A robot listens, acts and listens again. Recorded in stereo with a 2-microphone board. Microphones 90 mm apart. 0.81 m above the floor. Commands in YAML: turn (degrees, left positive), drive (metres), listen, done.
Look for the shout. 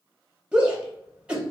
turn: -30
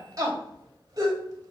turn: -135
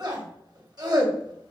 turn: -50
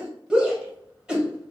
turn: -10
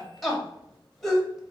done: "Facing the shout."